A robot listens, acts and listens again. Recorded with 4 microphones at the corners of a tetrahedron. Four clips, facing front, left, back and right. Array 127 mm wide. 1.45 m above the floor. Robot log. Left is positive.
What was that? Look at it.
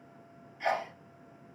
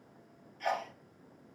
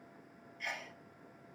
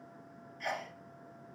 note: The sneeze: 20° left.
cmd yaw +20
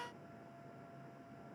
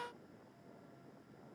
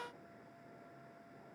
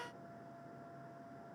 end: Facing where the sneeze came from. I can't hear it now.